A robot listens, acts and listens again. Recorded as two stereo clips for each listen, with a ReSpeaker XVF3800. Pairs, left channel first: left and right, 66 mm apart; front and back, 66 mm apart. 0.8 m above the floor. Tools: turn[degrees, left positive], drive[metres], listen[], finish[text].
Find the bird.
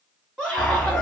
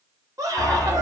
Thought: The bird: 35° left.
Action: turn[35]
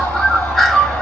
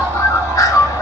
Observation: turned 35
Action: finish[Facing the bird.]